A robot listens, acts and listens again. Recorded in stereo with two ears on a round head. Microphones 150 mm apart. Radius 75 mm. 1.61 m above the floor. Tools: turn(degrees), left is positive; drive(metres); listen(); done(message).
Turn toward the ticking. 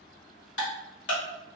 turn(degrees=90)
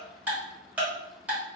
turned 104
turn(degrees=-10)
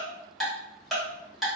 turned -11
done("Facing the ticking.")